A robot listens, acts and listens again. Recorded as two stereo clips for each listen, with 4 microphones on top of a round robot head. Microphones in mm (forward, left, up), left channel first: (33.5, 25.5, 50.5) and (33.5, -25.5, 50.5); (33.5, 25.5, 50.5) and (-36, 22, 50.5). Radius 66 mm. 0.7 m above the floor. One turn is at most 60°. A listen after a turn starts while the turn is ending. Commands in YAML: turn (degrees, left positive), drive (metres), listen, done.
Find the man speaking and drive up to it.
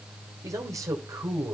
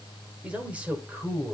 turn: -60
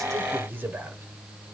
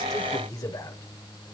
turn: -40
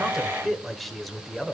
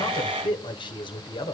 drive: 1.0
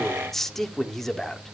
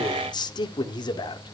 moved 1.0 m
drive: 1.0
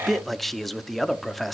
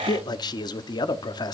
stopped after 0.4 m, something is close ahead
done: "I am next to the man speaking."